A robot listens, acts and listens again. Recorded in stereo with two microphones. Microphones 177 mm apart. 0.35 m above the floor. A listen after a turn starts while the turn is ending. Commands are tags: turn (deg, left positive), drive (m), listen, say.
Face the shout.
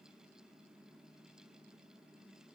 <listen/>
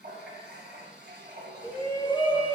<turn deg="30"/>
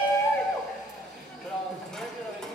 <say>Found it: a shout, straight ahead, 1 to 2 m away.</say>